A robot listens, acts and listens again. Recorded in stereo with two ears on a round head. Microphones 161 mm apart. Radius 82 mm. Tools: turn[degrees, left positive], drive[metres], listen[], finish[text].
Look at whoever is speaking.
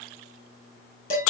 Action: listen[]
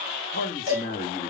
Thought: The man speaking: about 50° left or 130° left.
Action: turn[50]
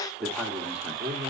Thought: So it is at 10° right.
Action: turn[-10]
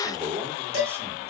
Thought: The man speaking is now 10° right.
Action: turn[-10]
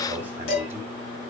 Thought: The man speaking is now 15° right.
Action: turn[-15]
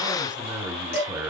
Action: finish[Found it: a man speaking, straight ahead.]